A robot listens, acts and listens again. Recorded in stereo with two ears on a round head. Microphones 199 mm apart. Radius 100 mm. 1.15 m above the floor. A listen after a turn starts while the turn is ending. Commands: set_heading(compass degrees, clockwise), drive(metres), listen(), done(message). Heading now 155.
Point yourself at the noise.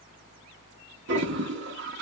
set_heading(210)
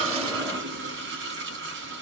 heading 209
set_heading(274)
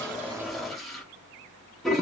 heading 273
done("Facing the toilet flushing.")